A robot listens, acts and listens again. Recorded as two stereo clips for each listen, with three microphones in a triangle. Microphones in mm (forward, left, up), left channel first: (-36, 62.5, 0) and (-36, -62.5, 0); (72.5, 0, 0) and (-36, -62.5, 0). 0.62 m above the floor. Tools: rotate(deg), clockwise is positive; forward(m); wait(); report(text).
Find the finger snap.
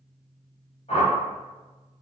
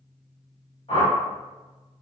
wait()
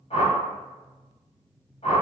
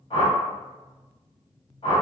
wait()
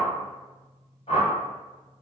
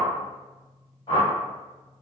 report("I can't make out a finger snap, only a whoosh.")